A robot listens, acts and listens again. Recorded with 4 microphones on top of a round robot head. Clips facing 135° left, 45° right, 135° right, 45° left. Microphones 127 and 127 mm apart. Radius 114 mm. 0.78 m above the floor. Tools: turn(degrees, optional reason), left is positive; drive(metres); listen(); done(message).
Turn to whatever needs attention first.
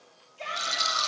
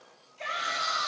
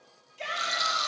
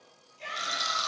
turn(degrees=-160, reason="The shout: 160° right.")
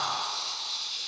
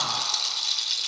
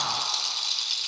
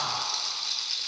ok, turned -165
listen()
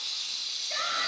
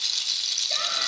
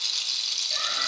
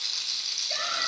listen()
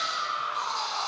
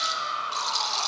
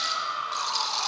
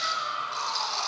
turn(degrees=10, reason="The shout is now 10° left.")
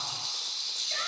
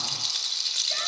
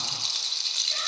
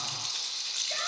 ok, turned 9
listen()
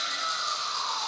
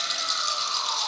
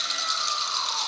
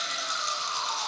listen()
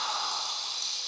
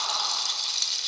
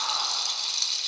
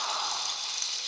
done("I heard a shout from this way, but can't make it out now.")